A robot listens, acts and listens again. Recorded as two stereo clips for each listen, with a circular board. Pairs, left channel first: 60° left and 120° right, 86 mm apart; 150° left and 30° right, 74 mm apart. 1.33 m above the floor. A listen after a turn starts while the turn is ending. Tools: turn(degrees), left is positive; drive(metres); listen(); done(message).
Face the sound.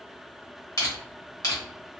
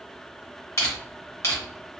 turn(degrees=100)
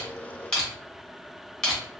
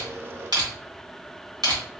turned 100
turn(degrees=-20)
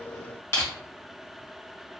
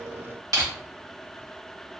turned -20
done("Facing the crushing.")